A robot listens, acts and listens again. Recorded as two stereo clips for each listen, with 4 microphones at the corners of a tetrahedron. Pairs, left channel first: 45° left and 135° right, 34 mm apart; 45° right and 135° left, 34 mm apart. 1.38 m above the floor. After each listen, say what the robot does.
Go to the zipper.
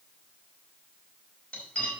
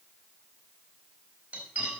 Keep listening.
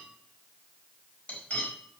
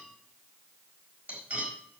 Keep listening.
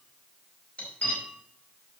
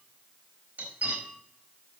I can't make out a zipper, only cutlery clinking.